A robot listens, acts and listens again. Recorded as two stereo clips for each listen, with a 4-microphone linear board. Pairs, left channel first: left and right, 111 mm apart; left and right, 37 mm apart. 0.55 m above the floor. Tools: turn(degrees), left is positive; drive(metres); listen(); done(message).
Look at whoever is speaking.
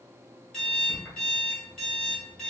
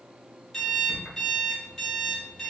listen()
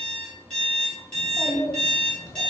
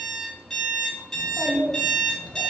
turn(degrees=25)
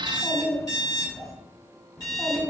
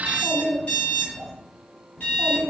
done("Facing the child speaking.")